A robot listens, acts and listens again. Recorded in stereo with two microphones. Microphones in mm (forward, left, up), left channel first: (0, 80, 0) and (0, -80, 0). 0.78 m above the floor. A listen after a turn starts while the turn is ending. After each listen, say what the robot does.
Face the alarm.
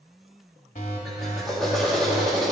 Turn 50° left.
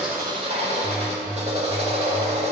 Turn 10° left.
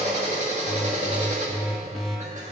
Found it: an alarm, straight ahead, 1 to 2 m away.